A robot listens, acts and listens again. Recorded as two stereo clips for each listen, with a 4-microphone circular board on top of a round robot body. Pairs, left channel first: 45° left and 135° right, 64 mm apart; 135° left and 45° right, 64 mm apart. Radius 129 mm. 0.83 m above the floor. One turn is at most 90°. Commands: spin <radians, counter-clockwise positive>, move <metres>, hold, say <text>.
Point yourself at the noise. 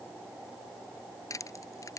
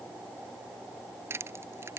say Found it: crushing, straight ahead.